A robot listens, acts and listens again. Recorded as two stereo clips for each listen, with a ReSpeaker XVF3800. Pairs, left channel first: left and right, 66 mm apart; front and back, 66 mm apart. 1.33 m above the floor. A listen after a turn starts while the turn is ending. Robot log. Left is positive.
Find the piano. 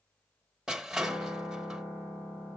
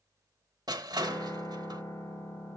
note: The piano: 20° right.
cmd yaw -20
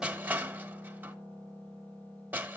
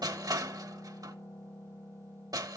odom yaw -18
end: Facing the piano, over 4 m away.